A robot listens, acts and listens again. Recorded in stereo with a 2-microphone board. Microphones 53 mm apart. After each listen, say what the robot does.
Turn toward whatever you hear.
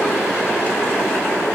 Keep listening.
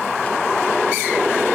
Keep listening.
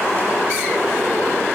I can't make out anything to turn to.